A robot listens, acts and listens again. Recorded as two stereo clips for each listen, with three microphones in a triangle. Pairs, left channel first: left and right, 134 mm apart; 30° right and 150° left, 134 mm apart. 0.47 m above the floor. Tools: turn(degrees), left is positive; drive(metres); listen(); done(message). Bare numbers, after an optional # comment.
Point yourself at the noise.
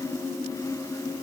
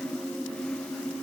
listen()
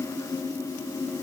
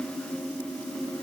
listen()
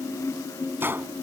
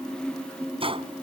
# The gunshot: 165° right.
turn(-165)
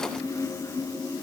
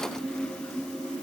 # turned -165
done("I heard a gunshot from this way, but can't make it out now.")